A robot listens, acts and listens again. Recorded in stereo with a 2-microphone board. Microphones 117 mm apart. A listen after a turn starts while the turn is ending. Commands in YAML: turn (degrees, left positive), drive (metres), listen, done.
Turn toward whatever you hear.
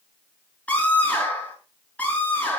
turn: 30
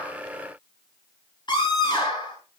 turn: 140
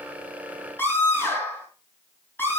turn: 20
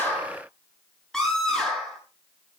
done: "Found it: a scream, straight ahead, over 4 m away."